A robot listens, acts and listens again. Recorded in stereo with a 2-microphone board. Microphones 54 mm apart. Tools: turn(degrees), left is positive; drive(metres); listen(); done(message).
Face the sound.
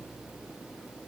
listen()
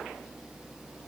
listen()
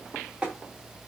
turn(degrees=-20)
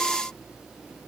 listen()
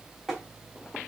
done("Found it: tapping, straight ahead, 1 to 2 m away.")